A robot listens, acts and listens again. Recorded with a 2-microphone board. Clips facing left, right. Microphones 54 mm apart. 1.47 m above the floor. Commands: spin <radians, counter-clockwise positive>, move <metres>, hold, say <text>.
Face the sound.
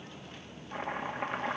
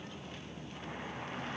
spin 1.13
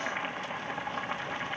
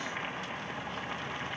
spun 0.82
spin 0.35
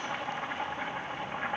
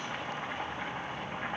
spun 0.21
spin 0.17
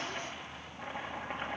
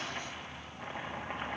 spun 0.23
say Found it: chopping, straight ahead.